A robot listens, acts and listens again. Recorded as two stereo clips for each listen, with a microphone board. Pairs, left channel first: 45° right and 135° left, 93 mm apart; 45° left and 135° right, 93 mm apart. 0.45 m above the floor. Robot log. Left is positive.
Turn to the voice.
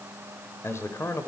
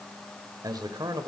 note: The man speaking: 100° right.
cmd yaw -100
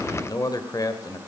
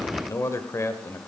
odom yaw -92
note: The man speaking is now 10° right.
cmd yaw -10
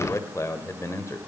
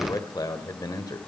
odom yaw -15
end: Found it: a man speaking, straight ahead, 1 to 2 m away.